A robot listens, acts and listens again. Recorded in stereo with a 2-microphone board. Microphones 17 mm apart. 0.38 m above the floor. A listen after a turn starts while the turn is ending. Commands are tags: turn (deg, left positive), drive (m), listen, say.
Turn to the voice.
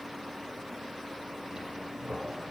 <listen/>
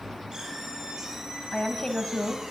<turn deg="65"/>
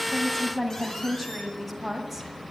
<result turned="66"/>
<say>Facing the woman speaking.</say>